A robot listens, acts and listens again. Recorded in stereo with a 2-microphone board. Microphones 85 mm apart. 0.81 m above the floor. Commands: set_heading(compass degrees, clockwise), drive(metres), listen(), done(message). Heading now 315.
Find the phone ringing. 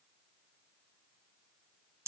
listen()
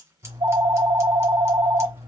set_heading(45)
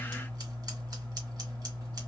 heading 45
set_heading(30)
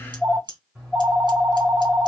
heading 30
done("Facing the phone ringing, 1 to 2 m away.")